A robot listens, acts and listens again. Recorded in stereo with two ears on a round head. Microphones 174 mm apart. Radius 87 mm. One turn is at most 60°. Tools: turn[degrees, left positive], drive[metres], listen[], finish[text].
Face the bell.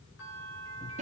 Thought: The bell: about 75° left or 105° left.
Action: turn[60]
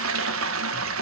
Action: listen[]
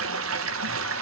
Action: listen[]
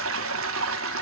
Action: finish[I heard a bell, but can't make it out now. It was about 15° left or 45° left.]